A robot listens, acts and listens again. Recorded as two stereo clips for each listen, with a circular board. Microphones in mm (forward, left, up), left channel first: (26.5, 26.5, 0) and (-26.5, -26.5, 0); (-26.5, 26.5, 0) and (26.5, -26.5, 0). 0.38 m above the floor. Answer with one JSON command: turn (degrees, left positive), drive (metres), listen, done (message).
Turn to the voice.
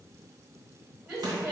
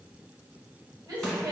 {"turn": -65}
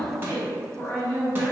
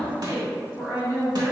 {"done": "Facing the woman speaking, 1 to 2 m away."}